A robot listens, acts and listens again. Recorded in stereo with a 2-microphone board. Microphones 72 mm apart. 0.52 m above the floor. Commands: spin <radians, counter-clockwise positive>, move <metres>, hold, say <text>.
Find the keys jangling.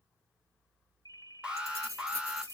spin -0.79
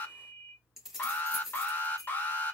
say Facing the keys jangling, 2 to 4 m away.